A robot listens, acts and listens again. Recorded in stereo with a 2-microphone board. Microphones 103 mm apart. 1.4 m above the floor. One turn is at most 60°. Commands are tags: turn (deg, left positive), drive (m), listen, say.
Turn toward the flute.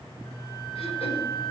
<turn deg="30"/>
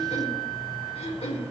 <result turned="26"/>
<turn deg="-15"/>
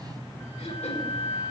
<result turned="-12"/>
<say>Found it: a flute, straight ahead.</say>